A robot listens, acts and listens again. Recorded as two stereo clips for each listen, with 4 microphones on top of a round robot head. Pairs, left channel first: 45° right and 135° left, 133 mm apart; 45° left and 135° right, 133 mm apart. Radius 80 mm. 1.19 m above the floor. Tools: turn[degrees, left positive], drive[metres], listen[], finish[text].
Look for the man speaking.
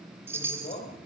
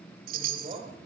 Thought: The man speaking: 90° right.
Action: turn[-90]
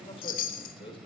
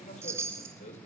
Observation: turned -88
Thought: The man speaking is now 10° left.
Action: turn[10]
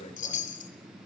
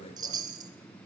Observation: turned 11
Action: finish[Found it: a man speaking, straight ahead.]